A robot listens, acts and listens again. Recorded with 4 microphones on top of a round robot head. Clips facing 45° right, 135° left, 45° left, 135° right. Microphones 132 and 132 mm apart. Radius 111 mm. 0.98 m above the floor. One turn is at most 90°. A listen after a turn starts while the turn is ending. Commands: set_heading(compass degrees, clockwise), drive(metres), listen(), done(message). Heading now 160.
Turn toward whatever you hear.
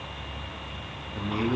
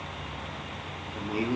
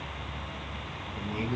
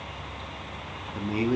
set_heading(250)
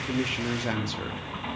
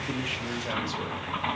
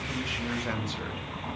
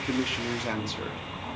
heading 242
set_heading(317)
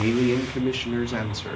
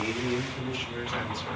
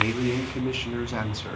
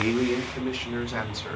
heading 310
set_heading(345)
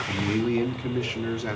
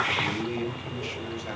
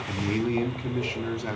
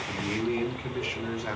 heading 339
set_heading(359)
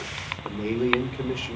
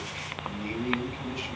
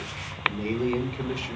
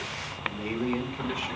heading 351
set_heading(1)
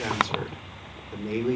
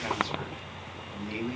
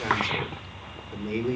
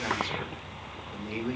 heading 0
done("Facing the man speaking.")